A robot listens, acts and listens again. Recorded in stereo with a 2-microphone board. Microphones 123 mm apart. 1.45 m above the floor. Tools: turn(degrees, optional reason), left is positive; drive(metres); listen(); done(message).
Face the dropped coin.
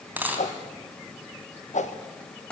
turn(degrees=-30)
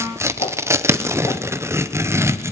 listen()
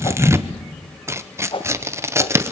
done("I heard a dropped coin, but can't make it out now. It was about 15° left or 135° right.")